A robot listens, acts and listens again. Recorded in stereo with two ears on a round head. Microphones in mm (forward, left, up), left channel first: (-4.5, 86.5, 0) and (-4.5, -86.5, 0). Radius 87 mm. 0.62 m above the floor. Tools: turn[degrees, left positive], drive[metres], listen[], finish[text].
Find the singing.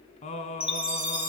Thought: The singing: about 40° left or 140° left.
Action: turn[40]
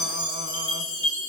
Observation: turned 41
Action: listen[]
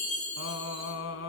Thought: So it is at 100° left.
Action: turn[100]
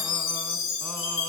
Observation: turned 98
Action: listen[]
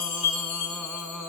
Action: finish[Facing the singing, 1 to 2 m away.]